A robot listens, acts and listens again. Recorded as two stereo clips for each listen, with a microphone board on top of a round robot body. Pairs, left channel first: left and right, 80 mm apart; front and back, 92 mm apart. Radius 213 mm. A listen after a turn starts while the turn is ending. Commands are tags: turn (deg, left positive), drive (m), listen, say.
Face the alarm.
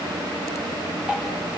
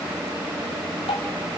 <listen/>
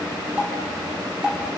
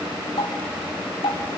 <listen/>
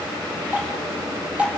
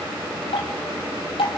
<say>I can't make out an alarm, only dripping.</say>